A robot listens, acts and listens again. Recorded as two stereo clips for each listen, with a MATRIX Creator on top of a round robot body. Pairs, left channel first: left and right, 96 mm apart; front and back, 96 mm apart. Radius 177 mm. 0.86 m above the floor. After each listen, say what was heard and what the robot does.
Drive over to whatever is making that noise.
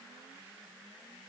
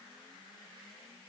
Keep listening.
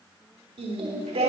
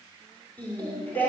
The singing: 75° right. Turn 75° right.
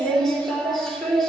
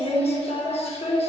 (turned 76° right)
Drive 1.0 m forward.
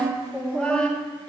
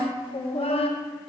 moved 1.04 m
The singing is now 10° left. Turn 10° left.
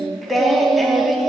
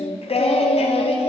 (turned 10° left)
Drive 1.0 m forward.
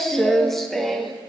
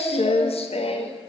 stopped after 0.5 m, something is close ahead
I am next to the singing.